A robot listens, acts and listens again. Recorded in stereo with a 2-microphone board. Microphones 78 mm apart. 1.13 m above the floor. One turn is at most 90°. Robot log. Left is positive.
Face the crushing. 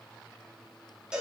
cmd idle
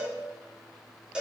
cmd idle
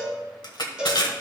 note: The crushing: about 65° left or 115° left.
cmd yaw +65
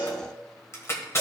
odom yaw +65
note: So it is at 40° left.
cmd yaw +40
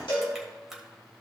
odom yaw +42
cmd idle
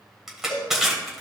end: Found it: crushing, straight ahead, 1 to 2 m away.